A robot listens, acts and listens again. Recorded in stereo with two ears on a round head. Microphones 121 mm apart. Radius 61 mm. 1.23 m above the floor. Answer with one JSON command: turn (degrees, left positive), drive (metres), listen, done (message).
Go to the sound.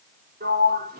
{"turn": -90}
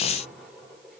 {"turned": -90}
{"listen": true}
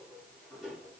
{"drive": 1.0}
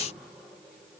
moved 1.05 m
{"listen": true}
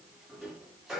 {"drive": 1.0}
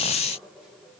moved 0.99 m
{"listen": true}
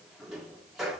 {"drive": 1.0}
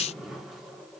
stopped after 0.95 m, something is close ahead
{"listen": true}
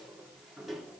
{"listen": true}
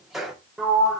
{"done": "Arrived at the sliding door, straight ahead."}